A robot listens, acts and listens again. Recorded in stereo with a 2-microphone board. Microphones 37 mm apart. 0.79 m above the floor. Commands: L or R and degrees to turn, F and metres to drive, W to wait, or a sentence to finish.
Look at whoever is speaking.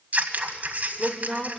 L30
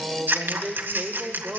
R25
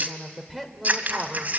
Found it: a woman speaking, straight ahead.